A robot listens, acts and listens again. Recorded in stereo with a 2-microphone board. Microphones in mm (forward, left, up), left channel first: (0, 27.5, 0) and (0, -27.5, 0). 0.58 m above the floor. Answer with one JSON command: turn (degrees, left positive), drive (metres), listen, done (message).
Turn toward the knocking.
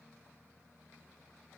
{"listen": true}
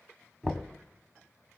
{"turn": 30}
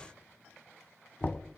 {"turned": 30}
{"turn": 140}
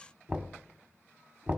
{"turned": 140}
{"turn": -30}
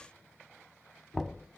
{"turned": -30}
{"done": "Found it: knocking, straight ahead, 1 to 2 m away."}